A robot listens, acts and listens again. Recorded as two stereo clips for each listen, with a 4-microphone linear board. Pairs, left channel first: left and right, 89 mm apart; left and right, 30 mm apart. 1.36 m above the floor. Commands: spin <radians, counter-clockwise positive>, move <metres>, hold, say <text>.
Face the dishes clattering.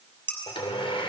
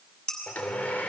spin 0.44
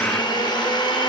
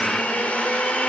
hold
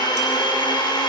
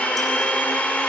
hold
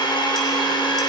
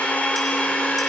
say I heard dishes clattering, but can't make it out now. It was about straight ahead or 130° left.